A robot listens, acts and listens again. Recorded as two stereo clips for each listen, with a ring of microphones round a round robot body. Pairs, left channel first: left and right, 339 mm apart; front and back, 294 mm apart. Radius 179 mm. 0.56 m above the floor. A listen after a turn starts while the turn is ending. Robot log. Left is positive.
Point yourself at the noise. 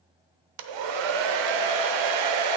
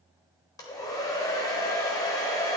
note: The hair dryer: 80° right.
cmd yaw -80
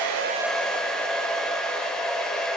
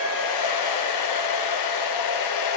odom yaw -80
end: Found it: a hair dryer, straight ahead, under 1 m away.